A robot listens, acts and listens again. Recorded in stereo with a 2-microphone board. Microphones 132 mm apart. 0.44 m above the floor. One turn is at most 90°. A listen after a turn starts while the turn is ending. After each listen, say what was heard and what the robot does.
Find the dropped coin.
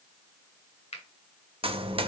The dropped coin: about 45° right or 135° right. Turn 45° right.
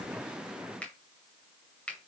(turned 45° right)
Keep listening.
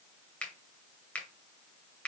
I heard a dropped coin, but can't make it out now. It was about straight ahead or 90° right.